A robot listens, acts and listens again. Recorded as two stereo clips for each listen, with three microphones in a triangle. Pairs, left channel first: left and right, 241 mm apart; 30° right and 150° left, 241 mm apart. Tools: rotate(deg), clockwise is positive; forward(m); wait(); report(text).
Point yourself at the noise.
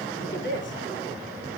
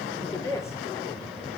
rotate(-50)
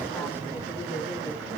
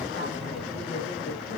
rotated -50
wait()
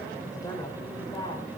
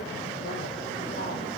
wait()
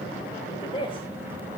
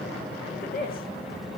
rotate(-20)
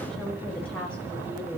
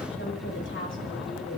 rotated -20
report("Found it: a woman speaking, straight ahead, over 4 m away.")